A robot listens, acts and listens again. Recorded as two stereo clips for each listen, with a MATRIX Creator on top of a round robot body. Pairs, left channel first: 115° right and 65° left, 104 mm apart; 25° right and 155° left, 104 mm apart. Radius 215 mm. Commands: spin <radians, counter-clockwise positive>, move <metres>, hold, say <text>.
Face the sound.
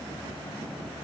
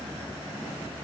hold
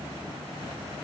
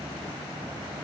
hold
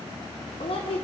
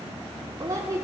spin -2.44
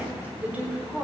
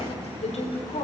spin -0.17
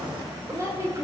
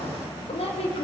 say Facing the woman speaking, over 4 m away.